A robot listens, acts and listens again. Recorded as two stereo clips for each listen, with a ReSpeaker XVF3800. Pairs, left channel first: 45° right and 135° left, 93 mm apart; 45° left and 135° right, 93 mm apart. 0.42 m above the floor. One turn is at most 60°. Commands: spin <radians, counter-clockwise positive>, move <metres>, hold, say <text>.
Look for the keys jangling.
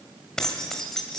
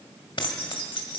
spin 0.70
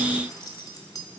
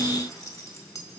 say Facing the keys jangling, 1 to 2 m away.